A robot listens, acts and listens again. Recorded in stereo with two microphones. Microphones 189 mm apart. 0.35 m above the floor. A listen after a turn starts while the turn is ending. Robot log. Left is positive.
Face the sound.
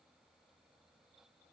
cmd idle
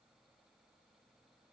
cmd idle
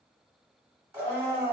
cmd yaw -30
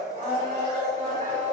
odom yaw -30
note: So it is at 135° right.
cmd yaw -135
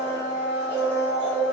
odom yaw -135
note: The blender is now 10° right.
cmd yaw -10
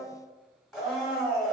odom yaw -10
end: Facing the blender, 1 to 2 m away.